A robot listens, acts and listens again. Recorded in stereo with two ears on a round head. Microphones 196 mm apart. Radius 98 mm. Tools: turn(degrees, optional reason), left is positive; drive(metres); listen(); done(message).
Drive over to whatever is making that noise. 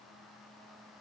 listen()
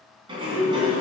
turn(degrees=-25, reason="The sliding door: about 25° right or 155° right.")
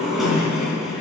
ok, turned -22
drive(metres=1.0)
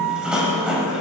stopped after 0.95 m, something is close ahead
done("Arrived at the sliding door, straight ahead.")